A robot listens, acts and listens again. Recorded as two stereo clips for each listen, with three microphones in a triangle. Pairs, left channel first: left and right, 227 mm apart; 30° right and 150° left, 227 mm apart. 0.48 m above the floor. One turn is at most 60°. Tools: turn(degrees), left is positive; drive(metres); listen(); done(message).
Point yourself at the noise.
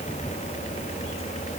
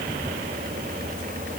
listen()
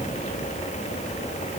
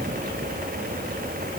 listen()
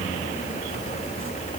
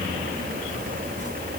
done("I can't make out anything.")